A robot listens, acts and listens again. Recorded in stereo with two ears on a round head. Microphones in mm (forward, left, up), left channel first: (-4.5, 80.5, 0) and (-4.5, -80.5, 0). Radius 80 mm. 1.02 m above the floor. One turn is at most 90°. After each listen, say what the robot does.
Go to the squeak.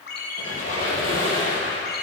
Turn 45° left.
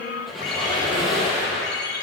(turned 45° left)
Drive 1.0 m forward.
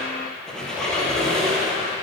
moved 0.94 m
Drive 1.0 m forward.
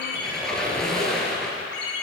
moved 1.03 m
Drive 1.0 m forward.
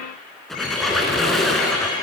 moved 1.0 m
Drive 1.0 m forward.
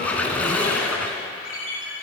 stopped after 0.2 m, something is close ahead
Turn 10° left.
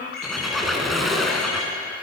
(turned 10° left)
Arrived at the squeak, straight ahead.